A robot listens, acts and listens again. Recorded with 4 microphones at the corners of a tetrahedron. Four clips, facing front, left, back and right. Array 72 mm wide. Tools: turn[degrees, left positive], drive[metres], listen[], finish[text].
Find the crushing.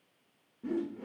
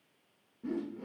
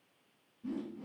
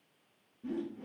Action: listen[]
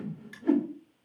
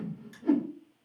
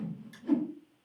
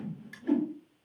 Thought: The crushing: 35° right.
Action: turn[-35]
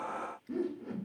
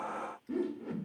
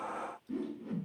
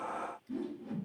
Action: listen[]
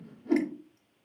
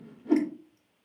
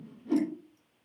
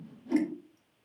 Action: listen[]
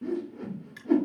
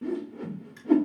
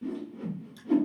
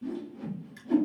Action: finish[Found it: crushing, straight ahead.]